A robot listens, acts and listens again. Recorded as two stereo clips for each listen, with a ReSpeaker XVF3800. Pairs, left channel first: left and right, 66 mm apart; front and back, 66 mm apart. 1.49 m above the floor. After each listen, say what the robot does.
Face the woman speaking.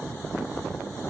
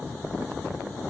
Keep listening.
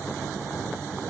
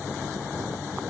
Keep listening.
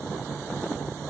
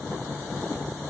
I can't make out a woman speaking to turn to.